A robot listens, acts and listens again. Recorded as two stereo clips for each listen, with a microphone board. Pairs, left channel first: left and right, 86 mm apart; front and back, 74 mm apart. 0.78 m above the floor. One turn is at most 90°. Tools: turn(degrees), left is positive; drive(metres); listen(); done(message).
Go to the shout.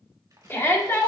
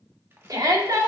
turn(degrees=90)
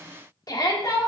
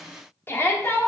turn(degrees=55)
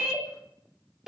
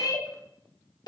drive(metres=1.0)
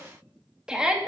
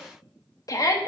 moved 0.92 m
turn(degrees=-10)
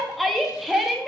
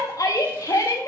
drive(metres=1.0)
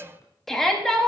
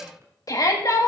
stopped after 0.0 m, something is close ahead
done("Arrived at the shout, straight ahead.")